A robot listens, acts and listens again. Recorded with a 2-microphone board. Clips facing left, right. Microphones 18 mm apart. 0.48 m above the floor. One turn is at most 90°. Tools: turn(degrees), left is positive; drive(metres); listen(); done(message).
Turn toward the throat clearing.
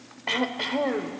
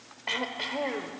turn(degrees=30)
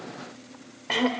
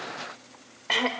turn(degrees=-15)
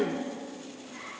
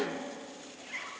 done("Found it: throat clearing, straight ahead, 1 to 2 m away.")